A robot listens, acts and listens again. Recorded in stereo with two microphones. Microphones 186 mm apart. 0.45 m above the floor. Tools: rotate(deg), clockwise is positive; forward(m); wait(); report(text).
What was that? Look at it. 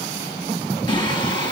rotate(-20)
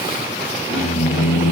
rotate(-40)
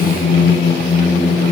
rotate(-105)
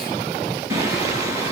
rotate(15)
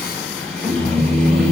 report("Facing the singing, over 4 m away.")